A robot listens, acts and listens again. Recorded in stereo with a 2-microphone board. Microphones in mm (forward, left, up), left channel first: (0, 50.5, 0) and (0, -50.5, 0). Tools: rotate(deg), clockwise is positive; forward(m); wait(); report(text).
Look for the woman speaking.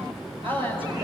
rotate(60)
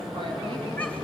wait()
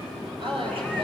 rotate(60)
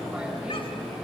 wait()
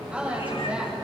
rotate(15)
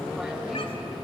wait()
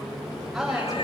report("Found it: a woman speaking, straight ahead.")